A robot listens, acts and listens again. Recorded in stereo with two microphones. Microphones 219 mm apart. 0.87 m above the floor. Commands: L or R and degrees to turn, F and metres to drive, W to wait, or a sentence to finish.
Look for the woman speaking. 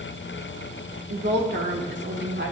R60
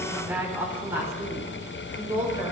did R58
R15
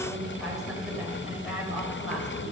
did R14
Facing the woman speaking, over 4 m away.